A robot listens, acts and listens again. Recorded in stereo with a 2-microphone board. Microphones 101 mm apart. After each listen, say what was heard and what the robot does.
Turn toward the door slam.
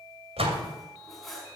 Turn 90° right.
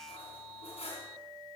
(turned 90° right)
I heard a door slam from this way, but can't make it out now.